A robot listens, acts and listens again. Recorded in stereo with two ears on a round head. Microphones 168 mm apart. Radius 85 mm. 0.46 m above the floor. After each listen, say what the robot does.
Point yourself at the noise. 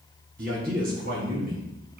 Turn 50° right.
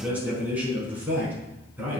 Turn 10° right.
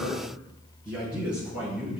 Facing the man speaking.